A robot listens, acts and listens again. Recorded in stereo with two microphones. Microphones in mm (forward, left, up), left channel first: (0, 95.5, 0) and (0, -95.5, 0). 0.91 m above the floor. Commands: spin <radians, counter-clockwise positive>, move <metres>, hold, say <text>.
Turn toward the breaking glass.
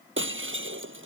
spin -1.57
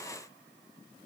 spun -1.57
say Facing where the breaking glass came from. I can't hear it now.